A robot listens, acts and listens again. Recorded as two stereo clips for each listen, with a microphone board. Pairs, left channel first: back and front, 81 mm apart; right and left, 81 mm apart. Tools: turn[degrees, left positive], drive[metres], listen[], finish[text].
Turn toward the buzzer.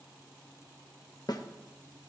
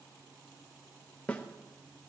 Action: listen[]
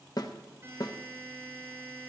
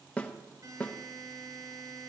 Thought: The buzzer: 60° left.
Action: turn[60]
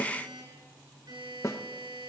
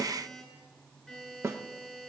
Action: finish[Found it: a buzzer, straight ahead.]